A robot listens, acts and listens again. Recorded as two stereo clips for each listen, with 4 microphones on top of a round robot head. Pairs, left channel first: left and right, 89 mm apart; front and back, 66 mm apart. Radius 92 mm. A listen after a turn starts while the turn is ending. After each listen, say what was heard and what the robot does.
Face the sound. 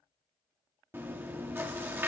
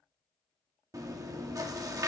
The chewing: 155° right. Turn 155° right.
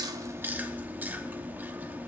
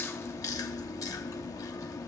The chewing is now 20° right. Turn 20° right.
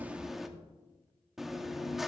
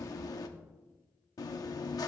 Facing the chewing, under 1 m away.